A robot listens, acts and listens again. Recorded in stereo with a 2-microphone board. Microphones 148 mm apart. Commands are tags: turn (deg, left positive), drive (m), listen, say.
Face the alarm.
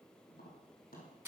<listen/>
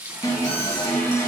<turn deg="25"/>
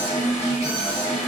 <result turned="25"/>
<turn deg="130"/>
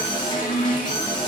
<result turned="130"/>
<turn deg="35"/>
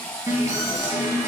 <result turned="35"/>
<turn deg="-25"/>
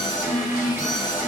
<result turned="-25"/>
<turn deg="-15"/>
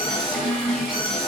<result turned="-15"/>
<say>Found it: an alarm, straight ahead, 2 to 4 m away.</say>